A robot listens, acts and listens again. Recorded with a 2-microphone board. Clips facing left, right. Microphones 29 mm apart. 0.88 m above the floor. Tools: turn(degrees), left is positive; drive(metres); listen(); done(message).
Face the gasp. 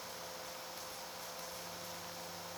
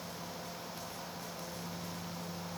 listen()
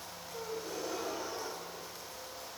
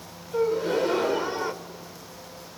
turn(degrees=-70)
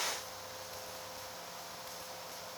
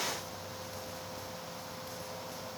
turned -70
listen()
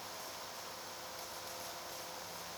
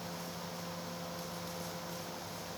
done("I heard a gasp, but can't make it out now. It was about straight ahead or 40° right.")